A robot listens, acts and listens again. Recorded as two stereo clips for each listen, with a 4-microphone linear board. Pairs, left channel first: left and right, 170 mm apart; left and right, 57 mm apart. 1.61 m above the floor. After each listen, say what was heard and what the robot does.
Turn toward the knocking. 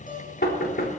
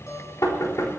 The knocking: about 70° left or 110° left. Turn 70° left.
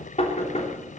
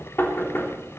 So it is at 40° left. Turn 40° left.
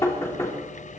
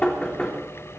The knocking is now 20° left. Turn 20° left.
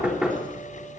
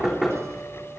Facing the knocking.